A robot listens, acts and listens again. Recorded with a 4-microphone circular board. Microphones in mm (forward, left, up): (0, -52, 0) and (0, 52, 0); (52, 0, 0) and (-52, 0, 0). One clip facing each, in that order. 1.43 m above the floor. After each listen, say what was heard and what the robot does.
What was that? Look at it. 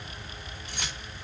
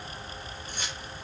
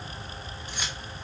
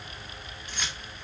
The keys jangling: 80° right. Turn 80° right.
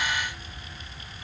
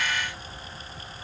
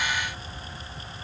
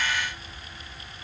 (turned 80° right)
Keep listening.
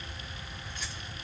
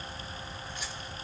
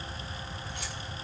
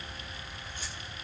Keep listening.
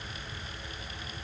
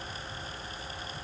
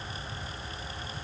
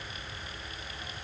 I heard keys jangling from this way, but can't make it out now.